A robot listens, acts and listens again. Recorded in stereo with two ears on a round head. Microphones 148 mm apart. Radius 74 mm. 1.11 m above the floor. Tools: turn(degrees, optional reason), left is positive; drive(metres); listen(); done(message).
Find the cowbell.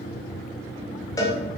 turn(degrees=20, reason="The cowbell: about 20° left or 160° left.")
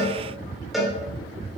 done("Facing the cowbell, 2 to 4 m away.")